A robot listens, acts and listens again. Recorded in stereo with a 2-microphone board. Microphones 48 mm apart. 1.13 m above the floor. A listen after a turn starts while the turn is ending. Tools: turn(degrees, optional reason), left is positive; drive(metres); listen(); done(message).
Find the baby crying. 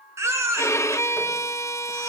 turn(degrees=-90)
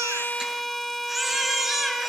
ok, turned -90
done("Found it: a baby crying, straight ahead, 2 to 4 m away.")